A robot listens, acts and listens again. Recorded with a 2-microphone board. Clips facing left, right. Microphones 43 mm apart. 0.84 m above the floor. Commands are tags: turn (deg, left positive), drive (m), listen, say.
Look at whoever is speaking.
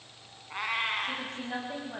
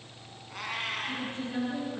<turn deg="90"/>
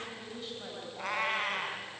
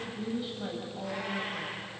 <say>Facing the woman speaking, over 4 m away.</say>